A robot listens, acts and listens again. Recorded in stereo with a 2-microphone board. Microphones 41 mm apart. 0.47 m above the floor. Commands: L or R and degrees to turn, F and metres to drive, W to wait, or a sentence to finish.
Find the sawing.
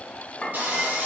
R45
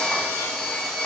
Found it: sawing, straight ahead, 1 to 2 m away.